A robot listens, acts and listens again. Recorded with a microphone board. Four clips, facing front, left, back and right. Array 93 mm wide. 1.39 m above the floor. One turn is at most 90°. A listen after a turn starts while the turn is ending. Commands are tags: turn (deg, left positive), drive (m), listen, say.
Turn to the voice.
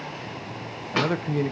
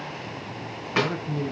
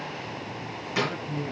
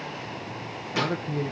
<say>Facing the man speaking, under 1 m away.</say>